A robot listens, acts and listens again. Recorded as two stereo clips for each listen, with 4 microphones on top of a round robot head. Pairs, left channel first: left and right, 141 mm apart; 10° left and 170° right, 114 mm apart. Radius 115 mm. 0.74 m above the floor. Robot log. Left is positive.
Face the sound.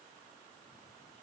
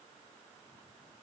cmd idle
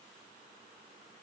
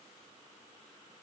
cmd idle
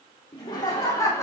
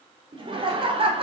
note: The laughter: 160° left.
cmd yaw +160
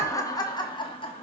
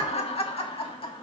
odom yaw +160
note: The laughter is now 45° left.
cmd yaw +45
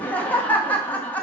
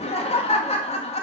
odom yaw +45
note: The laughter is now 10° left.
cmd yaw +10
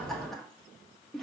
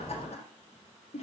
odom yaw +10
end: Facing the laughter.